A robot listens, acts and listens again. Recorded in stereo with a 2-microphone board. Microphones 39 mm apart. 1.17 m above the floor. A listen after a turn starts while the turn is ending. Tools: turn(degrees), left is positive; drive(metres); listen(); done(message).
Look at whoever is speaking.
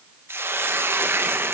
listen()
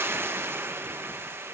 listen()
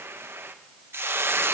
done("I can't make out anyone speaking, only a hiss.")